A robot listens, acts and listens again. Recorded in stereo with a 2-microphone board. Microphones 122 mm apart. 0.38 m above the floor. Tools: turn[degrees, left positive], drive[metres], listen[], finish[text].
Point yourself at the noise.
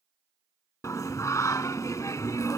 Thought: The singing: about 30° left or 150° left.
Action: turn[30]
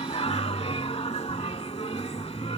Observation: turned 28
Thought: So it is at 125° left.
Action: turn[125]
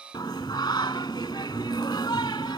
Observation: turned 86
Thought: The singing is now 40° left.
Action: turn[40]
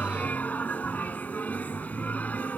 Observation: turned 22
Thought: The singing is now 15° left.
Action: turn[15]
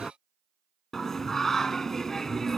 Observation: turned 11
Action: finish[Found it: singing, straight ahead.]